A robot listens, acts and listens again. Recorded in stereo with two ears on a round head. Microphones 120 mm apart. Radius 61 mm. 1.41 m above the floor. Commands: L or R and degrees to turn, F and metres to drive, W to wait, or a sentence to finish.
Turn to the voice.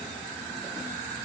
W
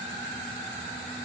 W
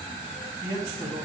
R30
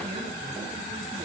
W
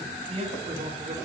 R135
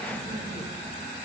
W
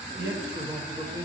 R35
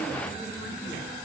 W
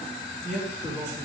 Facing the man speaking.